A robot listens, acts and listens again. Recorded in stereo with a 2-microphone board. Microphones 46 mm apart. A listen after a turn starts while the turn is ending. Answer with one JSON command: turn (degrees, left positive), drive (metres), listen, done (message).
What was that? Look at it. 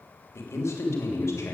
{"turn": 90}
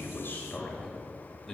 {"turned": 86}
{"done": "Found it: a man speaking, straight ahead, 2 to 4 m away."}